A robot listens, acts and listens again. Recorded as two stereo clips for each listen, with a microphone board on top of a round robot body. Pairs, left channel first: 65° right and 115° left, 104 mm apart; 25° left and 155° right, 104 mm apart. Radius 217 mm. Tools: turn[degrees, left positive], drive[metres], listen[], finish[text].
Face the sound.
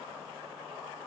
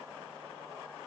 Action: listen[]
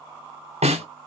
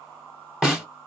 Thought: The snare drum: 115° left.
Action: turn[115]
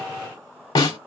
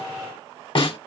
Thought: The snare drum is now 20° right.
Action: turn[-20]
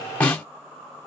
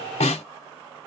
Thought: The snare drum is now 10° left.
Action: turn[10]
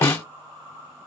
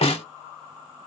Action: finish[Facing the snare drum, 1 to 2 m away.]